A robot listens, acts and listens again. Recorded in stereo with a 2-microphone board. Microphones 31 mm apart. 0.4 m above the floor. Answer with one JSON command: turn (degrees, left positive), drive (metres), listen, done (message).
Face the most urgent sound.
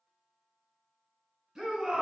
{"turn": -30}
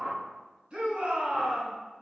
{"turn": -135}
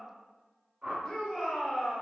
{"done": "Found it: a shout, straight ahead."}